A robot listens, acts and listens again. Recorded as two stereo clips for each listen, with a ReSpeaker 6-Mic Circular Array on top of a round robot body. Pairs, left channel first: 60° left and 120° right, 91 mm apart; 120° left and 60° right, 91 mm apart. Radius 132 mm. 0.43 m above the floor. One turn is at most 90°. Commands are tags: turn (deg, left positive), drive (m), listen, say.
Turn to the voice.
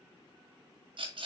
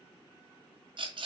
<listen/>
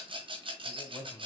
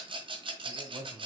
<turn deg="-10"/>
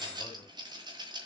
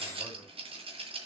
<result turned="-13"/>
<listen/>
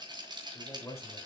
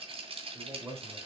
<say>Found it: a man speaking, straight ahead, 2 to 4 m away.</say>